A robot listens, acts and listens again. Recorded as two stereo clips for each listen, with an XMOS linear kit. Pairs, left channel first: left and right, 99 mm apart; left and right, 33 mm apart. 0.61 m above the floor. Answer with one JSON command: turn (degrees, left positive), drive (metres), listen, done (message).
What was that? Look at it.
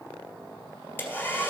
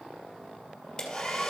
{"turn": 25}
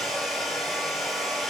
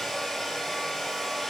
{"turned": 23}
{"done": "Found it: a hair dryer, straight ahead, 2 to 4 m away."}